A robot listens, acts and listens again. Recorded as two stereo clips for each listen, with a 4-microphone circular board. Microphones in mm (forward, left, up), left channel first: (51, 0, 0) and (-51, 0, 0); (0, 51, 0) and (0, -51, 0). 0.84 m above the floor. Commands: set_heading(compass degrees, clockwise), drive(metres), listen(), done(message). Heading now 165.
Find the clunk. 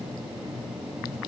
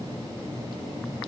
listen()
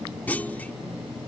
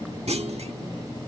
set_heading(240)
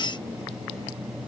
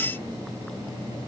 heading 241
done("I heard a clunk from this way, but can't make it out now.")